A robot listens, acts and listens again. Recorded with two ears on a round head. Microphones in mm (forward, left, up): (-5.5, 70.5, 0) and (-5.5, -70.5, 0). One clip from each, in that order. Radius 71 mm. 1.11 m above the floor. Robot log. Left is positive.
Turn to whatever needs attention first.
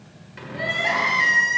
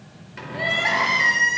cmd yaw -30
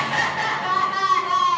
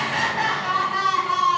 note: So it is at 25° left.
cmd yaw +25
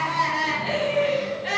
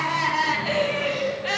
end: Facing the crying, 1 to 2 m away.